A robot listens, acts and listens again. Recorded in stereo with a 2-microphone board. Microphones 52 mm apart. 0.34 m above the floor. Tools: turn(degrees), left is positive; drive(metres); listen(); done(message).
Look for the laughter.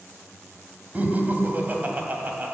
turn(degrees=-35)
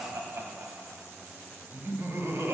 turn(degrees=-105)
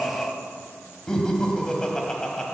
turn(degrees=15)
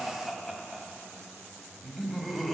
done("Facing the laughter.")